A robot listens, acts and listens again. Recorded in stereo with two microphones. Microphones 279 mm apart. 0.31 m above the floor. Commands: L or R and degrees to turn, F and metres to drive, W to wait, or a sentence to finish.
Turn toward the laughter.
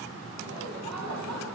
R90
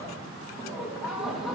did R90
Found it: laughter, straight ahead.